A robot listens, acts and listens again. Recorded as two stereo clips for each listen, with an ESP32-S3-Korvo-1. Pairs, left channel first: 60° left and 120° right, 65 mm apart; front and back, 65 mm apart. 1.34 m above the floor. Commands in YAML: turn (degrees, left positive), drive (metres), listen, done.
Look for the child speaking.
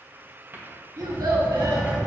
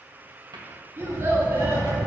turn: -125
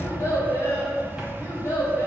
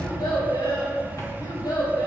turn: 10
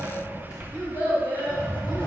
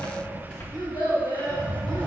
done: "Facing the child speaking, over 4 m away."